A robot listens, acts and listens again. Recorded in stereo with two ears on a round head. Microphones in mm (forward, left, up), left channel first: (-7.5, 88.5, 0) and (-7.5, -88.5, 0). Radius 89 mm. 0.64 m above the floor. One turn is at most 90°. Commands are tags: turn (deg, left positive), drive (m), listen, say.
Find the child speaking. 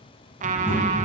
<turn deg="30"/>
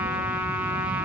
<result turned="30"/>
<listen/>
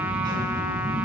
<turn deg="-25"/>
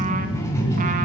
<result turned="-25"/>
<turn deg="15"/>
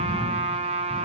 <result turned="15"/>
<say>Facing the child speaking, 2 to 4 m away.</say>